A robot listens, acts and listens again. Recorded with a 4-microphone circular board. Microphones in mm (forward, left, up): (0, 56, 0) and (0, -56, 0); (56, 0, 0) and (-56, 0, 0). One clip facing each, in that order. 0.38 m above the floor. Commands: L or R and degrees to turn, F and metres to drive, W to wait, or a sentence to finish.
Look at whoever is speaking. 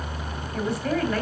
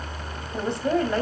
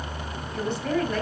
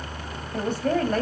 R145
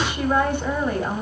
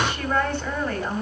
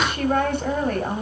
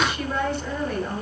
L15
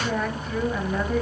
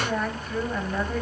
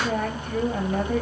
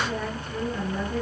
Found it: a woman speaking, straight ahead.